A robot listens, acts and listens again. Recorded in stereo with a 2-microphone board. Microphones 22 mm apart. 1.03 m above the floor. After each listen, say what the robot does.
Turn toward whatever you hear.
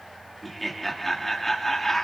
Turn 30° left.
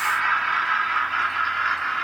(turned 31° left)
Turn 30° left.
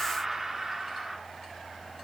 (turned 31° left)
Turn 20° right.
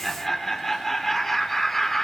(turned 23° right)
Turn 10° left.
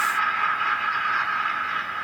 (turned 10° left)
Facing the laughter.